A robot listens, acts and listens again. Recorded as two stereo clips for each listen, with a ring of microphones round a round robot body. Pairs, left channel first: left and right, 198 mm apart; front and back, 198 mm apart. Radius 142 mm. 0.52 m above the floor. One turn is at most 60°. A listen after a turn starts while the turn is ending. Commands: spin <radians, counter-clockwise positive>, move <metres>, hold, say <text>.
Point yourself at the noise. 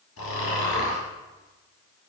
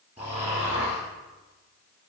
spin 1.05
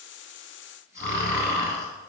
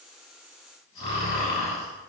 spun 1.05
spin 0.70
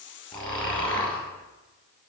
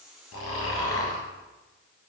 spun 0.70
say Found it: snoring, straight ahead.